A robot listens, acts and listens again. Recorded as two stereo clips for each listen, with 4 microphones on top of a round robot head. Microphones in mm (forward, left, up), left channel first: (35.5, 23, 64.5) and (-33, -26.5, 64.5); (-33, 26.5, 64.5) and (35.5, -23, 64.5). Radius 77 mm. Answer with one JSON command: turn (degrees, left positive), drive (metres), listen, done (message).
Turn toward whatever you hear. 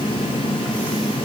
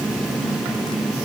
{"listen": true}
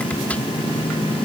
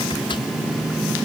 {"listen": true}
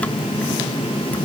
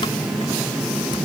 {"done": "I can't make out anything to turn to."}